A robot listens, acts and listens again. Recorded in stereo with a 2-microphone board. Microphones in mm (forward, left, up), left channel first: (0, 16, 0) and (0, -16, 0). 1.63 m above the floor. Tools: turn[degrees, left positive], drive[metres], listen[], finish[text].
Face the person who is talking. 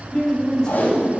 Thought: The woman speaking: about 20° left or 160° left.
Action: turn[20]
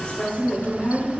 Thought: The woman speaking: about 30° left or 150° left.
Action: turn[30]
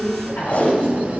Thought: So it is at 125° left.
Action: turn[125]
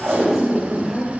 Thought: The woman speaking is now 15° left.
Action: turn[15]
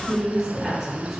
Action: finish[Facing the woman speaking, over 4 m away.]